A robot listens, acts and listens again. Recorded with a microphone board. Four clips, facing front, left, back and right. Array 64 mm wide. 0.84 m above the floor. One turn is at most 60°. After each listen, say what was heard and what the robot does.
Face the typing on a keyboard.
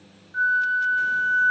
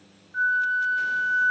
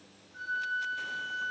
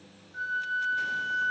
Keep listening.
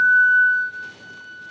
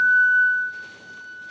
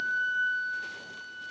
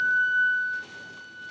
Keep listening.
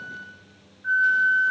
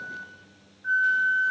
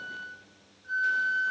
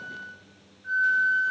I can't make out typing on a keyboard to turn to.